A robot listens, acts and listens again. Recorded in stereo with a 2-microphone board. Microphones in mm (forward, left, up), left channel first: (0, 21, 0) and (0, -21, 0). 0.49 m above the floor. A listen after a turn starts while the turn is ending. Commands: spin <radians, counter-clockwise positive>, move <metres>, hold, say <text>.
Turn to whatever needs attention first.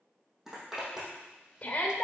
spin 0.52
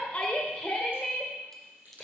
spin 0.17
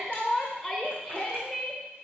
say Facing the shout.